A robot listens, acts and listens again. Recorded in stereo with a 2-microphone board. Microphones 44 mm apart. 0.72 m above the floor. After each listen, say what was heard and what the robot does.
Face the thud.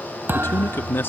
The thud: about 55° right or 125° right. Turn 55° right.
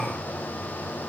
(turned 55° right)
Keep listening.
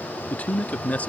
I heard a thud, but can't make it out now. It was about straight ahead or 70° right.